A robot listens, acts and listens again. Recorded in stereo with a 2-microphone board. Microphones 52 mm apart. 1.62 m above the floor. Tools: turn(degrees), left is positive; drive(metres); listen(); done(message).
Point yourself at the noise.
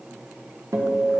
turn(degrees=-90)
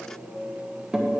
turn(degrees=-10)
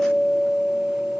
done("Facing the guitar, 1 to 2 m away.")